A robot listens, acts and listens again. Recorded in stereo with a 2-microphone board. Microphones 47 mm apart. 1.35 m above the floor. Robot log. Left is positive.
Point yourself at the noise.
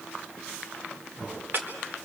note: The chopping: about 55° right or 125° right.
cmd yaw -55
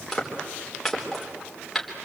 end: Found it: chopping, straight ahead, 2 to 4 m away.